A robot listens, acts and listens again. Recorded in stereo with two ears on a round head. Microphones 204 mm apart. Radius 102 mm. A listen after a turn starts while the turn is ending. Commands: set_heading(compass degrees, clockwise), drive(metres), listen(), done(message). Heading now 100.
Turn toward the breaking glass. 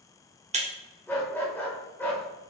set_heading(130)
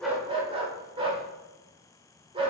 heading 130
listen()
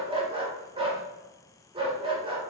done("I heard breaking glass, but can't make it out now. It was about straight ahead or 120° right.")